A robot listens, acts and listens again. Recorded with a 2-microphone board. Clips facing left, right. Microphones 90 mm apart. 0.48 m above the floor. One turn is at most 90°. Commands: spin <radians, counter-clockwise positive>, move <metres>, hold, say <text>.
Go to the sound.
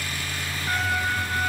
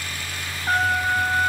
spin -0.87
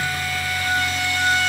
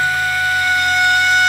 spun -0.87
spin -1.31
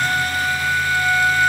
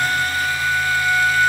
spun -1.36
move 1.0
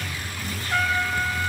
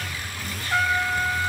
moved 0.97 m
move 1.0
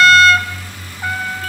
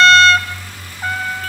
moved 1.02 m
move 1.0
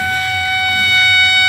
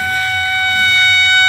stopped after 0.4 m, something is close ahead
spin 0.35
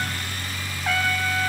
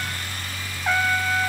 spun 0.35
say Arrived at the trumpet, straight ahead.